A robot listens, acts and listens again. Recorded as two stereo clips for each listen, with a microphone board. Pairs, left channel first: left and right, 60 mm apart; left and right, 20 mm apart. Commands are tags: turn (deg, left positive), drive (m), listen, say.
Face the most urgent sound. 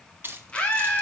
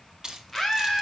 <turn deg="15"/>
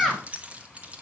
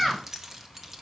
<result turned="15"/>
<say>Found it: a scream, straight ahead.</say>